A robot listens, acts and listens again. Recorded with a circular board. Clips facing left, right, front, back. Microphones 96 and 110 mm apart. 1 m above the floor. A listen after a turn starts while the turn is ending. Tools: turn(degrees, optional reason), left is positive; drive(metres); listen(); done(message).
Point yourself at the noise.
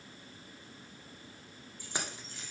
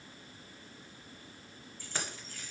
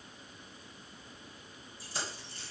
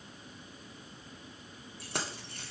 turn(degrees=160, reason="The keys jangling: 160° left.")
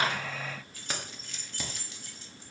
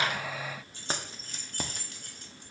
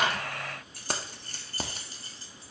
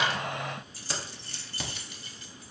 turn(degrees=-50, reason="The keys jangling is now 50° right.")
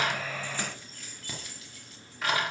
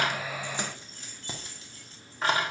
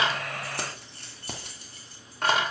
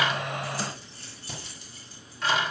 turn(degrees=-30, reason="The keys jangling is now 30° right.")
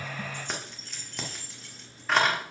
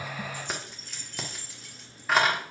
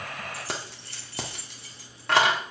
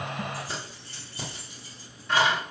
done("Found it: keys jangling, straight ahead.")